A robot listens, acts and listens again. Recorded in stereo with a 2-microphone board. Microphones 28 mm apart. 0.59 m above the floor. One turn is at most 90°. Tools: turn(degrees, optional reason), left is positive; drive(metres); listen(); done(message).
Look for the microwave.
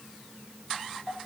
listen()
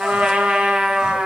listen()
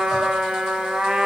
done("I can't make out a microwave, only a trumpet and crying.")